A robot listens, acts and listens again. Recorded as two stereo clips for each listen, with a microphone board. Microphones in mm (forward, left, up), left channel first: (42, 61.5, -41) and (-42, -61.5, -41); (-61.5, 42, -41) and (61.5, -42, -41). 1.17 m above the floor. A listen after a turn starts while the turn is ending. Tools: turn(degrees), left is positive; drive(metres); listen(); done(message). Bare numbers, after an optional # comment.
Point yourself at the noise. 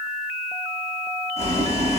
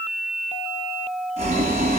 # The boiling: 10° left.
turn(10)
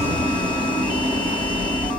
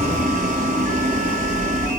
done("Facing the boiling, over 4 m away.")